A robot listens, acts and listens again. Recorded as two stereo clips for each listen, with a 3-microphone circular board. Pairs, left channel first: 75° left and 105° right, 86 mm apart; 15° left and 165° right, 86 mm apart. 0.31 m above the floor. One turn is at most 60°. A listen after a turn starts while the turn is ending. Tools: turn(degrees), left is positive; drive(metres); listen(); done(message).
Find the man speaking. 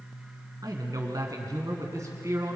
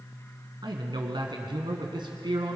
turn(degrees=-60)
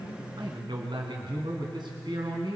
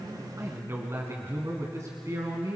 turn(degrees=-60)
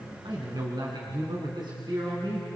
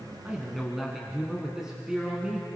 turn(degrees=-60)
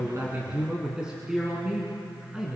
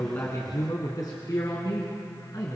turn(degrees=-25)
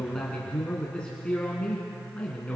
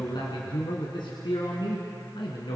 done("Facing the man speaking, 2 to 4 m away.")